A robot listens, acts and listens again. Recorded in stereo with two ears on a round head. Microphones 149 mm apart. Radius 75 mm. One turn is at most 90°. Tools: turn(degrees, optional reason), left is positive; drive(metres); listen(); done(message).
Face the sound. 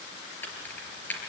turn(degrees=30)
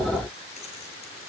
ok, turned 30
listen()
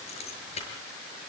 turn(degrees=90, reason="So it is at 140° left.")
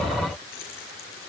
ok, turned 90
turn(degrees=50, reason="Nothing new. It was at 50° left.")
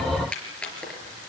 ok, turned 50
done("Found it: keys jangling, straight ahead, over 4 m away.")